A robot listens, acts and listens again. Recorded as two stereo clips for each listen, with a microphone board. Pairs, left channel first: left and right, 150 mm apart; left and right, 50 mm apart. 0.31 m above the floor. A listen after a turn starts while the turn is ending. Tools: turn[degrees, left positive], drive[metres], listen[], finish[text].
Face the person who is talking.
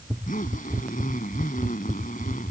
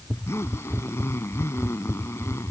Action: listen[]
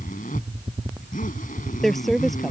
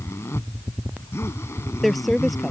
Action: turn[30]
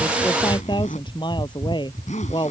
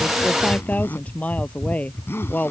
Thought: So it is at 150° left.
Action: turn[150]
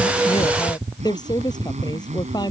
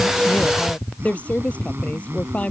Thought: The woman speaking is now 25° left.
Action: turn[25]
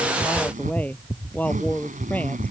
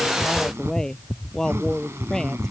Thought: The woman speaking is now 10° left.
Action: turn[10]
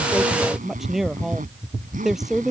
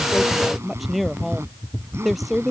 Action: finish[Facing the woman speaking.]